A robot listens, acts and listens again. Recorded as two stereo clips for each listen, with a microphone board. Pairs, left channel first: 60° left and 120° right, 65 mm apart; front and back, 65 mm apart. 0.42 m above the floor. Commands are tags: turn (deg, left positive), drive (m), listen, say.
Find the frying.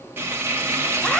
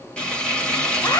<turn deg="-70"/>
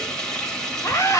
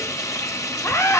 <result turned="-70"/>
<turn deg="-15"/>
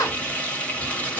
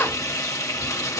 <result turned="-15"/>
<say>Found it: frying, straight ahead.</say>